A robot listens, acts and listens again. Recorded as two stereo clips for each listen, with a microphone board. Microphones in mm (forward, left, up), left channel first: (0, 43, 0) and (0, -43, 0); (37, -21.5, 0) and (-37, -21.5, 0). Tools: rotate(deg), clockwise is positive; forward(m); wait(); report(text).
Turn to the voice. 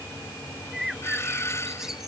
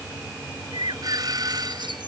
wait()
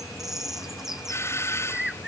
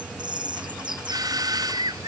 wait()
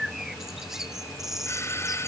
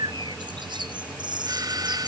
report("I can't make out anyone speaking, only a bird and a doorbell.")